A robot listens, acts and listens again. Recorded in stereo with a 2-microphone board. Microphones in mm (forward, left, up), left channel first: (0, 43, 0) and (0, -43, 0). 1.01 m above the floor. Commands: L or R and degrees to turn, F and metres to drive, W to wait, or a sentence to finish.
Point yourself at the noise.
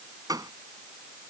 R50
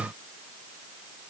W
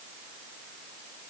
I heard a gunshot, but can't make it out now. It was about straight ahead or 80° right.